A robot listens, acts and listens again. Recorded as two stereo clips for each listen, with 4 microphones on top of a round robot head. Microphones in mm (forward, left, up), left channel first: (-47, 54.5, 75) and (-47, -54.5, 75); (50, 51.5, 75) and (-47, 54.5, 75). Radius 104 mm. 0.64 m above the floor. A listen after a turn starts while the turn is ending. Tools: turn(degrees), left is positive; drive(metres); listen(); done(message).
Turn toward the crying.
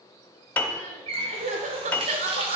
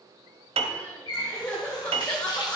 turn(degrees=-80)
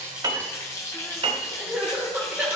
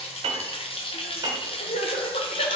turn(degrees=-10)
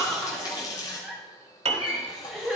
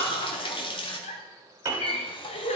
done("Facing the crying.")